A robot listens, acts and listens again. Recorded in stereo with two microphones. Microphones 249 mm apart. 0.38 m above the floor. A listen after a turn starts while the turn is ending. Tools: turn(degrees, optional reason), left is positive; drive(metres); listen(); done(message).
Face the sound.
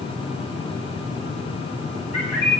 turn(degrees=-65, reason="The bird: about 65° right or 115° right.")
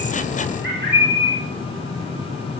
turn(degrees=-50, reason="So it is at 50° right.")
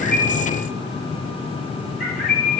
done("Found it: a bird, straight ahead.")